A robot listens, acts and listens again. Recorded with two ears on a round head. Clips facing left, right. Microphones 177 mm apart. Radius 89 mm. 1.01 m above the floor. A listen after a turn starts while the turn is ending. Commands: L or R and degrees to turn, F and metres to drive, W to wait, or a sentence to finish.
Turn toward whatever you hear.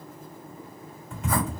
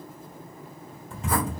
R30
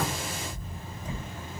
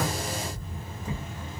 R120
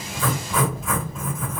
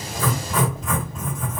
Found it: writing, straight ahead.